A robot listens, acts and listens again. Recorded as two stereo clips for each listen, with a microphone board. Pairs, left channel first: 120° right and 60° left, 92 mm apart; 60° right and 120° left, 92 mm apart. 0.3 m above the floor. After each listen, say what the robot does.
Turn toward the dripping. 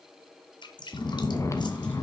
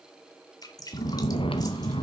Turn 100° right.
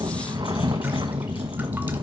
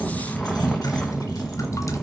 Keep listening.
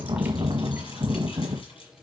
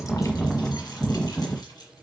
Keep listening.
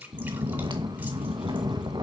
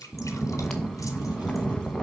Turn 15° right.
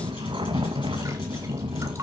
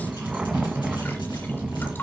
Keep listening.
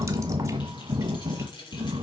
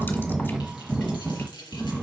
Keep listening.
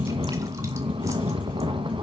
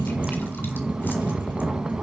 I heard dripping from this way, but can't make it out now.